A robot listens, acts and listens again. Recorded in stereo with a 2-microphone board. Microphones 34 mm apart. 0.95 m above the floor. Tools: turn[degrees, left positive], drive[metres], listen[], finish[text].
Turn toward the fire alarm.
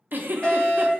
Thought: The fire alarm: about 25° left or 155° left.
Action: turn[25]
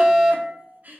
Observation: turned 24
Action: finish[Facing the fire alarm, 2 to 4 m away.]